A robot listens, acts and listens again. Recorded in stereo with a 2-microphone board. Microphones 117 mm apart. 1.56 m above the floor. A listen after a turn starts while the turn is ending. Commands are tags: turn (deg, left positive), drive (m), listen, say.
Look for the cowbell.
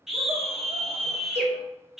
<turn deg="-70"/>
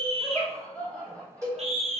<turn deg="-30"/>
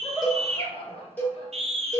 <turn deg="15"/>
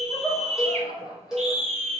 <say>Facing the cowbell.</say>